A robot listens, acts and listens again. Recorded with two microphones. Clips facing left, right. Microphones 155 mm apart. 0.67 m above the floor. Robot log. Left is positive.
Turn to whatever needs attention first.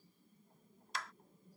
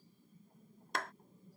cmd idle
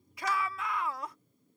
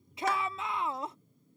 note: The shout: about 25° right or 155° right.
cmd yaw -25
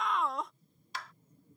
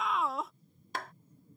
end: Facing the shout.